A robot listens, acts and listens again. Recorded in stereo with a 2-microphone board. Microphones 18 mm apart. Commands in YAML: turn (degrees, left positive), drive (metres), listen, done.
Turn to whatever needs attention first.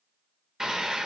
turn: -25
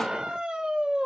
turn: -130
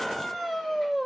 done: "Facing the scream, 1 to 2 m away."